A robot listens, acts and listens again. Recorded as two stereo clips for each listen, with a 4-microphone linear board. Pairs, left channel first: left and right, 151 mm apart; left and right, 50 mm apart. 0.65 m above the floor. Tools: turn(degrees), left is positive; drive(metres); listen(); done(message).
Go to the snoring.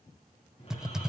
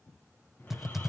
turn(degrees=40)
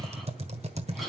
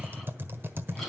drive(metres=1.0)
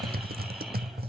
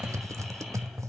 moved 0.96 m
drive(metres=1.0)
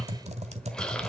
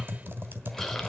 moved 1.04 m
drive(metres=1.0)
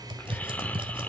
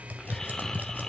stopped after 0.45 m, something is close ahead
turn(degrees=10)
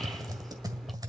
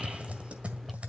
done("I am next to the snoring.")